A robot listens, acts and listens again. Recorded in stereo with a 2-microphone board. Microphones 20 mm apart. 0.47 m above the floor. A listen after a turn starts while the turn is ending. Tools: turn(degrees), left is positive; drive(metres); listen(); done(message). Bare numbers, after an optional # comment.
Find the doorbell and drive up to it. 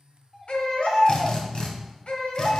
turn(30)
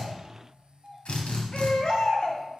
# So it is at 30° right.
turn(-30)
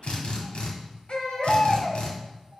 # The doorbell is now 15° right.
turn(-15)
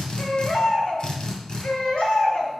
listen()
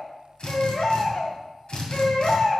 listen()
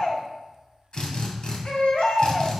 done("Facing where the doorbell came from. I can't hear it now. I did not reach it.")